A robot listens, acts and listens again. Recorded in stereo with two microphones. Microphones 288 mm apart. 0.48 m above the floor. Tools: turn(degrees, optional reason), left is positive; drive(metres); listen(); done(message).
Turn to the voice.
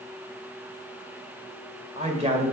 turn(degrees=-25, reason="The man speaking: about 25° right or 155° right.")
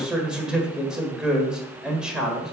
done("Facing the man speaking.")